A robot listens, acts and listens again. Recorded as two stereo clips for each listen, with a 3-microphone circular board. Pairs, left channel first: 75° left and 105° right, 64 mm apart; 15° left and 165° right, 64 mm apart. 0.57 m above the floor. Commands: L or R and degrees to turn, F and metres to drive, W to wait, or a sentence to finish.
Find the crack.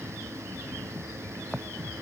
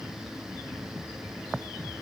W
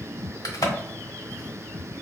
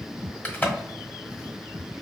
L80
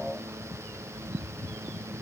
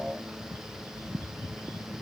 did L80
Facing where the crack came from. I can't hear it now.